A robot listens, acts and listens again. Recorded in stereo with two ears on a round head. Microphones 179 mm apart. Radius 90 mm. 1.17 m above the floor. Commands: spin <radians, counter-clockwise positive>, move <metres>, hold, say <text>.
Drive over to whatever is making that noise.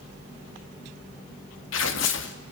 spin 1.13
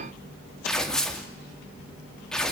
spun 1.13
move 1.0
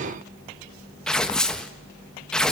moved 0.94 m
move 1.0
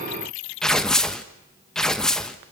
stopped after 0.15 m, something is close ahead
say I am next to the tearing paper.